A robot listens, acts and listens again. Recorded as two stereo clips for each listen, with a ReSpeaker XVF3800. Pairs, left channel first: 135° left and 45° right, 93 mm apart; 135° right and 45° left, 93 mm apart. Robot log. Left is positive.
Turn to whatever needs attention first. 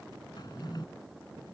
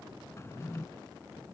cmd idle
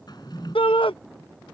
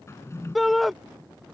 note: The shout: 135° left.
cmd yaw +135
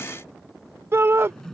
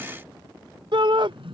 note: The shout is now 15° left.
cmd yaw +15
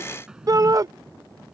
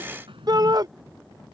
end: Found it: a shout, straight ahead.